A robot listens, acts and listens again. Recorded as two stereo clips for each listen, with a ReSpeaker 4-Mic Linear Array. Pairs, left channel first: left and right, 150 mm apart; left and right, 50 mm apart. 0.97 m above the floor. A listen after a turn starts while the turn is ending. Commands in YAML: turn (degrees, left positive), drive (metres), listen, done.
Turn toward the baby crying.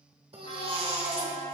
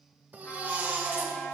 turn: -40
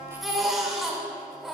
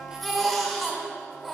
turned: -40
done: "Found it: a baby crying, straight ahead."